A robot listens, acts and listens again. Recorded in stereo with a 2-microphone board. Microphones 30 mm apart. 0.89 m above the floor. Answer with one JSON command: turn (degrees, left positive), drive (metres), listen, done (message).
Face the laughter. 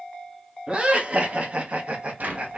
{"turn": -45}
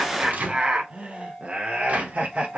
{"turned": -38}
{"turn": -50}
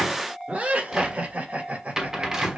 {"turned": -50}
{"turn": -55}
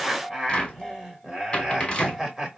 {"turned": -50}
{"turn": -10}
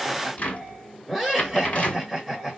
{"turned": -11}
{"done": "Facing the laughter."}